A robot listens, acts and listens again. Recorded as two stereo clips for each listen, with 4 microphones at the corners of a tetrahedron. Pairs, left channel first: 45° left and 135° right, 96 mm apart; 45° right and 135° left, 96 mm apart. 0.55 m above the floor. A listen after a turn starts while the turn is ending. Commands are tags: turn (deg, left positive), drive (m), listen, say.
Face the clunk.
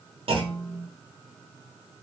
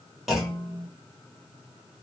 <turn deg="-135"/>
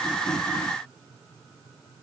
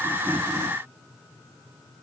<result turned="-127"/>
<turn deg="-10"/>
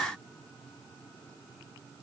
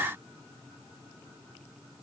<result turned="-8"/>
<say>I heard a clunk from this way, but can't make it out now.</say>